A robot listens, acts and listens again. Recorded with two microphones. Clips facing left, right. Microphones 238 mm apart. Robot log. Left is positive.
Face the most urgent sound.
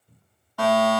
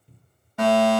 note: The fire alarm: about 20° right or 160° right.
cmd yaw -20
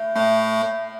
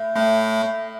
end: Facing the fire alarm, over 4 m away.